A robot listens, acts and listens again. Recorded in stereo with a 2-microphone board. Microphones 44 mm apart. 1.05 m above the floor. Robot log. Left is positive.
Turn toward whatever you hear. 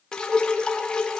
note: The dripping: about 20° left or 160° left.
cmd yaw +20
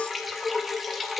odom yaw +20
end: Facing the dripping.